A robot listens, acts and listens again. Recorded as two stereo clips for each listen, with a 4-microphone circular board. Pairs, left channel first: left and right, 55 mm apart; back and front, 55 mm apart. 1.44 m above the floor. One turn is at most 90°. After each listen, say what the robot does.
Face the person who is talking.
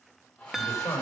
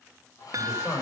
Turn 90° left.
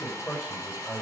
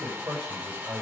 Turn 25° left.
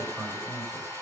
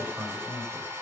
Facing the man speaking.